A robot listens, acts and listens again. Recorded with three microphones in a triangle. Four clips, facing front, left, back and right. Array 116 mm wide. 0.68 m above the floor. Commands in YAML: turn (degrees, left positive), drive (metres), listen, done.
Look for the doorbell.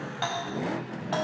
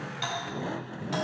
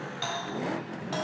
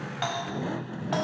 turn: -60
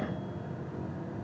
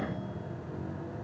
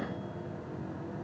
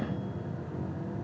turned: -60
listen: true
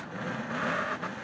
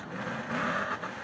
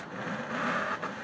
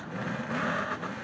listen: true
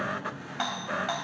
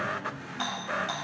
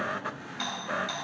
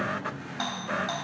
turn: -15
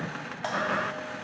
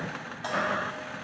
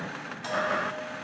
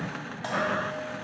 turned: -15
done: "Facing the doorbell."